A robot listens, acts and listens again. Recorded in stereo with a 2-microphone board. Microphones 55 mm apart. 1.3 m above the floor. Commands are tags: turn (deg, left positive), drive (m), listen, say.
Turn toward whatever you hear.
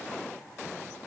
<listen/>
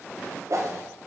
<turn deg="-60"/>
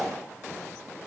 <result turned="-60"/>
<say>Facing the whoosh.</say>